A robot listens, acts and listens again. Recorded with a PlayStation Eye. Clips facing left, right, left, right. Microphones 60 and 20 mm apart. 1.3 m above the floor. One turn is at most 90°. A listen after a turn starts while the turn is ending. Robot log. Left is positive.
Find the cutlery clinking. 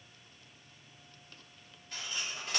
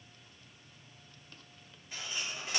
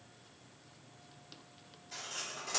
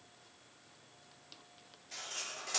cmd yaw -30
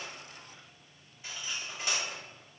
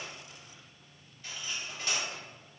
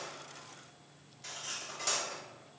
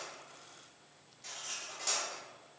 note: So it is at 20° left.
cmd yaw +20
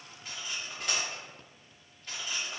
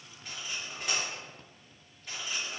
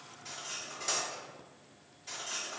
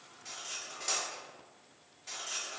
end: Found it: cutlery clinking, straight ahead, 1 to 2 m away.